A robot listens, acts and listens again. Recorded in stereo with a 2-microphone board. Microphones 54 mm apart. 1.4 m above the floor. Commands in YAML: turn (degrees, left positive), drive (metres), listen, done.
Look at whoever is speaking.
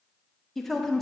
turn: 30
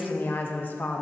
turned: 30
turn: 145
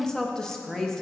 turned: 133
turn: 15
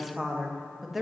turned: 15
done: "Found it: a woman speaking, straight ahead."